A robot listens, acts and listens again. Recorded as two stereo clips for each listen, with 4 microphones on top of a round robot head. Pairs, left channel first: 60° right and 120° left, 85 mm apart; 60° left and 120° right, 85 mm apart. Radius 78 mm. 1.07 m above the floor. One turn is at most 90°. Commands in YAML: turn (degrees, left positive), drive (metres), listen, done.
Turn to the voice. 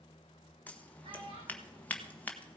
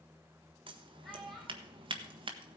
turn: 90
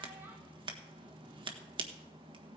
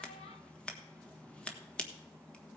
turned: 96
turn: 55
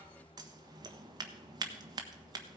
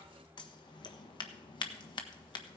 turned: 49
listen: true
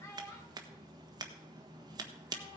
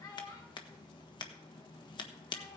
done: "Facing the child speaking."